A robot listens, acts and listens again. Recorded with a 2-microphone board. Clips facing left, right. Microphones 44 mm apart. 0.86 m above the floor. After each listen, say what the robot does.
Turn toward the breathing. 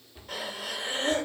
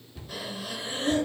Turn 55° left.
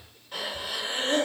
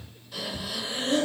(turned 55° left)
Turn 55° left.
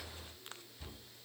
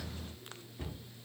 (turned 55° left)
Keep listening.
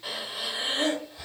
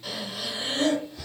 Turn 25° left.
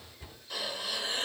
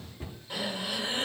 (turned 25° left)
Turn 25° right.
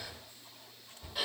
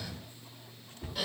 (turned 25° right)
Turn 10° left.
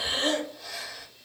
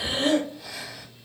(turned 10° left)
Facing the breathing.